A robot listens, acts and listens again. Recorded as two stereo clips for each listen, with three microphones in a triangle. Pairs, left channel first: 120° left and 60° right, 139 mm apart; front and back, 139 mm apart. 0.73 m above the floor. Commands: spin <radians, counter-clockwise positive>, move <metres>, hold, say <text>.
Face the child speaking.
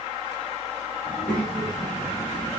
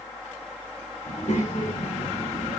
say Found it: a child speaking, straight ahead, 2 to 4 m away.